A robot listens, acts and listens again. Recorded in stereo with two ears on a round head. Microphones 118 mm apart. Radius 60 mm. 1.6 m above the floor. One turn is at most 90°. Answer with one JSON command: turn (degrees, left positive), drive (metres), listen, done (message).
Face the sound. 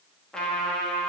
{"turn": 30}
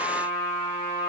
{"turn": 90}
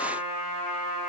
{"turn": 60}
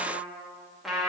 {"done": "Facing the trumpet."}